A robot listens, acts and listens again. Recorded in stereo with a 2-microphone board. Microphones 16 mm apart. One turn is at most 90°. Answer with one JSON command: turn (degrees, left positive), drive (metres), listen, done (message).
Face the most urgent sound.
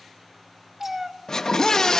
{"turn": 40}
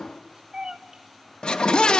{"turn": 90}
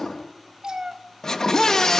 {"turn": 40}
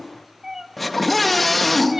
{"turn": 10}
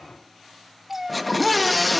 {"done": "Facing the scream, 2 to 4 m away."}